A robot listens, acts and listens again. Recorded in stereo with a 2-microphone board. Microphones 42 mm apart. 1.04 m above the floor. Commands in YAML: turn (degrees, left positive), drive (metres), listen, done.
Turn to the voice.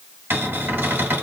listen: true
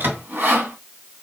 listen: true
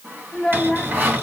turn: 15
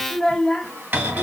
done: "Found it: a child speaking, straight ahead, 1 to 2 m away."